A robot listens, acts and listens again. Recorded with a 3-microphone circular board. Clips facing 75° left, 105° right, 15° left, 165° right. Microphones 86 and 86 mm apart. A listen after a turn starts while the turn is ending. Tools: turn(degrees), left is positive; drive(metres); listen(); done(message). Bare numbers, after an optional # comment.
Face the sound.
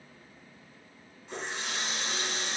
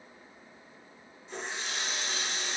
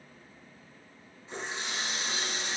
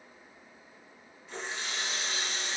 # The running tap: 70° left.
turn(70)
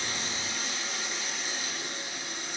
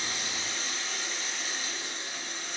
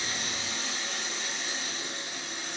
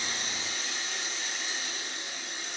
done("Facing the running tap, 1 to 2 m away.")